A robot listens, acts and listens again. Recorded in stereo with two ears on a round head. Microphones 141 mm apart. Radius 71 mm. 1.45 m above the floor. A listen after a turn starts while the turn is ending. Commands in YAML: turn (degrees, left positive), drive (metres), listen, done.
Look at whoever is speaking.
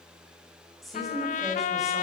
turn: 30
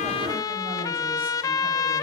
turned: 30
listen: true
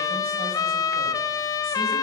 listen: true
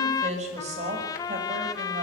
turn: -45
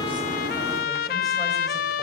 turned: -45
listen: true
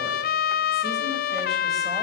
listen: true
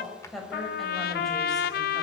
done: "Facing the woman speaking, over 4 m away."